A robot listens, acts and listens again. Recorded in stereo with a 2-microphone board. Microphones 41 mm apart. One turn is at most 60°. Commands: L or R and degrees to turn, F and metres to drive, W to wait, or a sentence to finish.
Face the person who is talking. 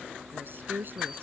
R55
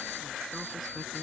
W
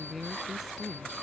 Found it: a woman speaking, straight ahead.